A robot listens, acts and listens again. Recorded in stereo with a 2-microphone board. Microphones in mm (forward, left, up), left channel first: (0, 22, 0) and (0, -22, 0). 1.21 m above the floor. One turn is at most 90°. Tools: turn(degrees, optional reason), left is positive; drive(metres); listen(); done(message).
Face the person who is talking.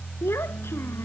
turn(degrees=65, reason="The child speaking: about 65° left or 115° left.")
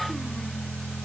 listen()
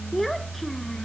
done("Found it: a child speaking, straight ahead.")